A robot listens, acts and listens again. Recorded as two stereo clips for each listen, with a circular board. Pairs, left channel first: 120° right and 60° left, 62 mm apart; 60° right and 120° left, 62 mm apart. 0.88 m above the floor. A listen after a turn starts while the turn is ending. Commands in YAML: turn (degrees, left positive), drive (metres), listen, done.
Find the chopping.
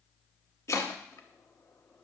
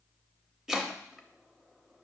turn: -160
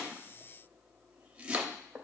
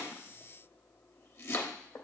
turn: -15
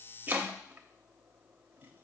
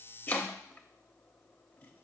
done: "Facing the chopping, under 1 m away."